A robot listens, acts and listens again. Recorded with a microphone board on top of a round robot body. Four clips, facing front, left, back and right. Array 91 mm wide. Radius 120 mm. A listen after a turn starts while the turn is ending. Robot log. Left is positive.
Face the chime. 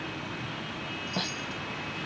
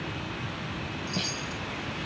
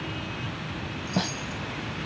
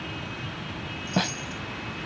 note: The chime: 145° left.
cmd yaw +145
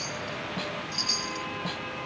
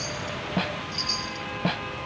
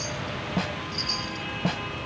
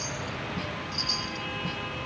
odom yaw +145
end: Facing the chime.